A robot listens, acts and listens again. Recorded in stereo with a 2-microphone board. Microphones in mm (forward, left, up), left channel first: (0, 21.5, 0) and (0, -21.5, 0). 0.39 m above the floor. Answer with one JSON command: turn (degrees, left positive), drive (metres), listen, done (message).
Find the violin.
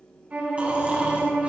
{"turn": -35}
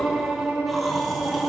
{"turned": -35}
{"turn": -110}
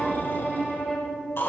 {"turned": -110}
{"done": "Found it: a violin, straight ahead, 2 to 4 m away."}